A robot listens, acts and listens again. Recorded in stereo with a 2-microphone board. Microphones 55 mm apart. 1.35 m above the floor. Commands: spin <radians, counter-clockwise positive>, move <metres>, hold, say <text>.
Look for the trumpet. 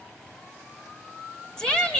hold
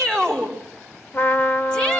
spin 0.79
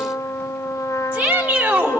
spin 1.57
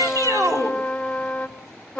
spin 0.26
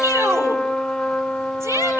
say Found it: a trumpet, straight ahead.